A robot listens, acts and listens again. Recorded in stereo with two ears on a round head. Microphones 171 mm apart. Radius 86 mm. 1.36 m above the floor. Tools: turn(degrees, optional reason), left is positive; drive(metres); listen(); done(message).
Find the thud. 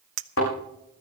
turn(degrees=90)
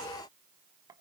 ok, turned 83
done("I heard a thud from this way, but can't make it out now.")